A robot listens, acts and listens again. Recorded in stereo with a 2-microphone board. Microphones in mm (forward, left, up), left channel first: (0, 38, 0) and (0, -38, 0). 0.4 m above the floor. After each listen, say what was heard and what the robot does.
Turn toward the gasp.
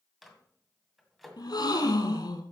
The gasp: about 70° left or 110° left. Turn 70° left.
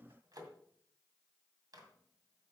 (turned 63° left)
Keep listening.
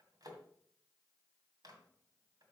I heard a gasp, but can't make it out now. It was about 5° left or 50° left.